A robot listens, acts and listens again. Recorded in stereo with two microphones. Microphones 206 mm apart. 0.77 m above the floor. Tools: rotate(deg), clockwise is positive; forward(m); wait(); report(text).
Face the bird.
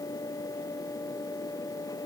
wait()
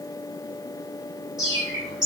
rotate(-30)
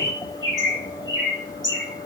rotate(35)
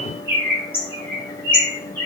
rotate(-10)
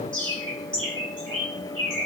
report("Facing the bird.")